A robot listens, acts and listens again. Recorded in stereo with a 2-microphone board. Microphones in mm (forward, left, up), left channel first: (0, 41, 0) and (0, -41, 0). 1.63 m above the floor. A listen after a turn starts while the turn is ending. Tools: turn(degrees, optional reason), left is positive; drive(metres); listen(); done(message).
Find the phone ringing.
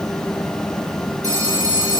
turn(degrees=-40, reason="The phone ringing: about 40° right or 140° right.")
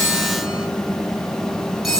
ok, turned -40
done("Facing the phone ringing.")